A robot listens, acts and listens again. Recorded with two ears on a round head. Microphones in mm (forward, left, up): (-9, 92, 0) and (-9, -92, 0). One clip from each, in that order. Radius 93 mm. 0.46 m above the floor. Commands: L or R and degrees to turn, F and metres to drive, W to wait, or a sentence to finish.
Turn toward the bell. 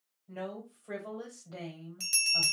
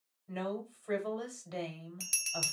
R30
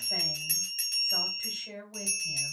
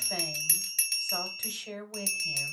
R145
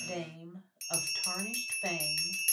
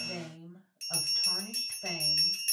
L10
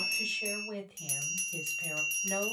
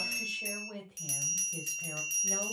Found it: a bell, straight ahead, 2 to 4 m away.